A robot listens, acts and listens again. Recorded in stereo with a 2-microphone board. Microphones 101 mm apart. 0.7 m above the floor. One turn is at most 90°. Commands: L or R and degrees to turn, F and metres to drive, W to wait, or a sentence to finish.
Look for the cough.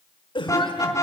L55
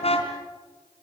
W
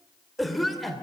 Facing the cough, 1 to 2 m away.